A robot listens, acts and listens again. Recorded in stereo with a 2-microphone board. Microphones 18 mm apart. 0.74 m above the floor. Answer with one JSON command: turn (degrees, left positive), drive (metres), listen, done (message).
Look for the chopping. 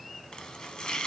{"turn": 50}
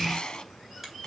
{"turn": 70}
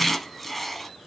{"done": "Facing the chopping, 1 to 2 m away."}